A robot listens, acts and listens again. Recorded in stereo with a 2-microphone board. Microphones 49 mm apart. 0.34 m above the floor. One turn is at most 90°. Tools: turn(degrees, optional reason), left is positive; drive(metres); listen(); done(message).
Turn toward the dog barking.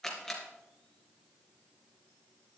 listen()
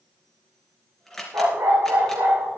turn(degrees=-90)
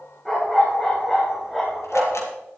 done("Found it: a dog barking, straight ahead.")